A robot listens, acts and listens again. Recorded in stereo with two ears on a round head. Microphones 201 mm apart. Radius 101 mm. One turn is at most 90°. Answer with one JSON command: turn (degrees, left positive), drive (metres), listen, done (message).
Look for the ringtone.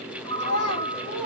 {"turn": 20}
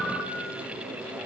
{"done": "Facing the ringtone, 1 to 2 m away."}